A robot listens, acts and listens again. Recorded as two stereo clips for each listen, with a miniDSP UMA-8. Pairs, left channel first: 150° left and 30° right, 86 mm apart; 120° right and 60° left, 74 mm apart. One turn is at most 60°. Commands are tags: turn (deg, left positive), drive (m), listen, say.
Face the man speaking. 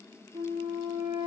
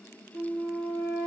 <listen/>
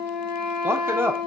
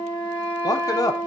<turn deg="-60"/>
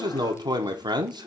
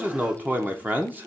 <say>Facing the man speaking, under 1 m away.</say>